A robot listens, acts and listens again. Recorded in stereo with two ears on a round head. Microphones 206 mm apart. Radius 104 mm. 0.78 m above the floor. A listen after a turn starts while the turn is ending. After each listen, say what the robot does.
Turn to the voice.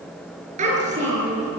Turn 30° right.
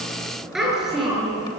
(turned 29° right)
Found it: a child speaking, straight ahead.